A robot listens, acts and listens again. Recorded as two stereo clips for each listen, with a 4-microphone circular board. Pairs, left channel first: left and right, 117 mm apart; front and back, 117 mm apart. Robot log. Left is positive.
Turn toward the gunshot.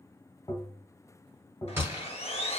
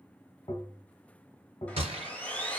note: The gunshot: 160° right.
cmd yaw -160
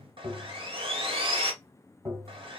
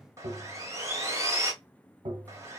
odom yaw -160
end: Facing where the gunshot came from. I can't hear it now.